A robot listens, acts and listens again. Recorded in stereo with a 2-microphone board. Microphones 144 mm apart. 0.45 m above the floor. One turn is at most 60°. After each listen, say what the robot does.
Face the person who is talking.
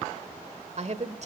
Turn 50° right.
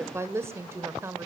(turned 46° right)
Turn 20° right.
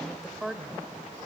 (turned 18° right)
Found it: a woman speaking, straight ahead, 1 to 2 m away.